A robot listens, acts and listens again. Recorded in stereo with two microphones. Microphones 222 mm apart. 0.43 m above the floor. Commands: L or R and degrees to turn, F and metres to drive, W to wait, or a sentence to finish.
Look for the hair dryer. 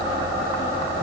W
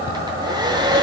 R20
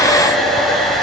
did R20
Facing the hair dryer.